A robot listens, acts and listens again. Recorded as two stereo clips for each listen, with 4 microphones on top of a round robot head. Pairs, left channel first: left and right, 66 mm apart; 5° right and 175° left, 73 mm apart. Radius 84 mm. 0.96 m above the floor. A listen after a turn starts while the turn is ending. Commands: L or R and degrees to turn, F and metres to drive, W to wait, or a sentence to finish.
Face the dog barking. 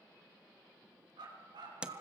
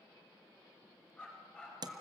R90
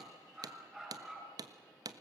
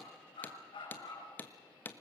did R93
Facing the dog barking, over 4 m away.